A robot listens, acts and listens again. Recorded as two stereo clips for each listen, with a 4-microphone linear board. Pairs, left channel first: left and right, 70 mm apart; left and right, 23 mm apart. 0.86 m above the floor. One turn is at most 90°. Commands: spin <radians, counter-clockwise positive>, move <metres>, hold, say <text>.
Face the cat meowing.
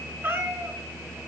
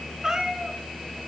spin -0.61
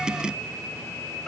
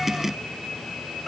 say Found it: a cat meowing, straight ahead, over 4 m away.